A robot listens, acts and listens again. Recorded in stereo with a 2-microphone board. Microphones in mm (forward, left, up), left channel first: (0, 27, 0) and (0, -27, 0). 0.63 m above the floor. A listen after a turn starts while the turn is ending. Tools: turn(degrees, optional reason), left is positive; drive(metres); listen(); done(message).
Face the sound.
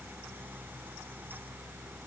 listen()
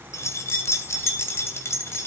turn(degrees=50, reason="The keys jangling: about 50° left or 130° left.")
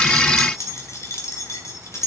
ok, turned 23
turn(degrees=65, reason="The keys jangling: about 65° left or 115° left.")
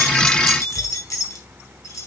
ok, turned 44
turn(degrees=70, reason="So it is at 70° left.")
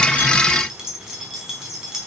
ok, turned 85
turn(degrees=-15, reason="The keys jangling is now 15° right.")
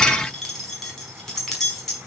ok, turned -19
done("Facing the keys jangling.")